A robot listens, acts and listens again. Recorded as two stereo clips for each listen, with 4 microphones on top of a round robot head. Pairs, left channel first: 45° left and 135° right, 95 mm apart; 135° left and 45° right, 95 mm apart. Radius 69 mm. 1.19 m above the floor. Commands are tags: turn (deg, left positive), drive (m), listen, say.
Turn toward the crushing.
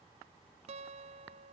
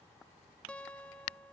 <listen/>
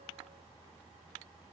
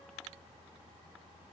<listen/>
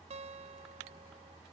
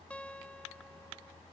<say>I can't make out crushing, only a guitar.</say>